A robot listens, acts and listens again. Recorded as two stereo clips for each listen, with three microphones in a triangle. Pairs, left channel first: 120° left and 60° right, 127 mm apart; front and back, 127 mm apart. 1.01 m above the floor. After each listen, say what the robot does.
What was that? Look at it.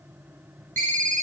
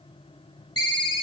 Turn 55° right.
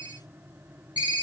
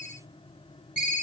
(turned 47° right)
Turn 10° right.
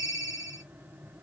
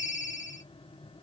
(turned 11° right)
Facing the ringtone.